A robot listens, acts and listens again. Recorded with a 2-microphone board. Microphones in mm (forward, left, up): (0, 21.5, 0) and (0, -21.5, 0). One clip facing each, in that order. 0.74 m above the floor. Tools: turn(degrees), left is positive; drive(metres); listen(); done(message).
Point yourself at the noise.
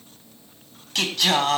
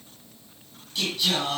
turn(degrees=75)
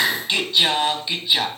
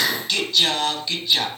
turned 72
turn(degrees=15)
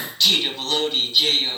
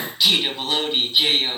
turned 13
turn(degrees=-15)
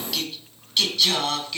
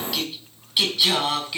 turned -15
turn(degrees=-10)
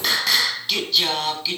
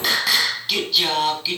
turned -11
done("Found it: singing, straight ahead.")